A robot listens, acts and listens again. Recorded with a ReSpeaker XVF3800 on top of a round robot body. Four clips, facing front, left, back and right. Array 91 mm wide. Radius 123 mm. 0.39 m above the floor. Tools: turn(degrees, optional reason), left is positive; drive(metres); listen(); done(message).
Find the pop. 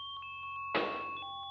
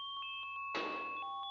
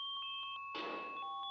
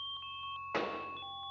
turn(degrees=-30, reason="The pop: 30° right.")
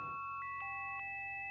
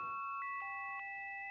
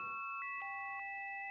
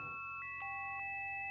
done("Facing where the pop came from. I can't hear it now.")